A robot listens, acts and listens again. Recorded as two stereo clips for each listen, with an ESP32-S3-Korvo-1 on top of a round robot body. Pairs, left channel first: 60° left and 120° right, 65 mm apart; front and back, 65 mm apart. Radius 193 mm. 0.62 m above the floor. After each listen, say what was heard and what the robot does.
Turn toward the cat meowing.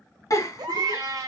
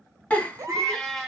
The cat meowing: 85° right. Turn 85° right.
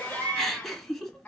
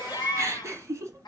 Keep listening.
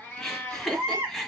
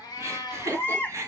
The cat meowing is now 10° right. Turn 10° right.
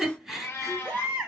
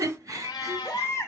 Found it: a cat meowing, straight ahead, 1 to 2 m away.